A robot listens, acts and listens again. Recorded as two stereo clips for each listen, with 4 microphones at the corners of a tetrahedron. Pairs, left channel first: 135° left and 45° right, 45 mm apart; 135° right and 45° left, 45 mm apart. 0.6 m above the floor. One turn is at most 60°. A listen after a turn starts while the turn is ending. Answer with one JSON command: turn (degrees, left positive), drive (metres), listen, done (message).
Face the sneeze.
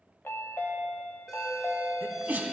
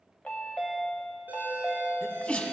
{"turn": -60}
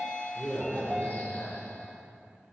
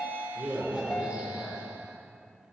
{"turn": -25}
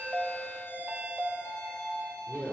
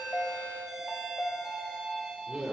{"done": "I heard a sneeze from this way, but can't make it out now."}